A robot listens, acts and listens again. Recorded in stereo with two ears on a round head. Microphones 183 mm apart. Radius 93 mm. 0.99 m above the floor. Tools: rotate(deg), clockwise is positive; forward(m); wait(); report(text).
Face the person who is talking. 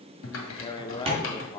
rotate(-20)
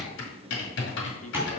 wait()
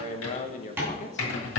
rotate(-135)
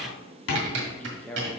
report("Facing the man speaking, under 1 m away.")